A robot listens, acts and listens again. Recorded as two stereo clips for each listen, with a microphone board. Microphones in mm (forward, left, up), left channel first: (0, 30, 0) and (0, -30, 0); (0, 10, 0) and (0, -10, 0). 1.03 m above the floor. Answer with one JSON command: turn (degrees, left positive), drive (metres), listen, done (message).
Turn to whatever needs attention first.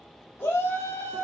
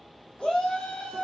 {"turn": 60}
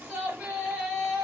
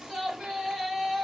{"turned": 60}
{"done": "Found it: a shout, straight ahead."}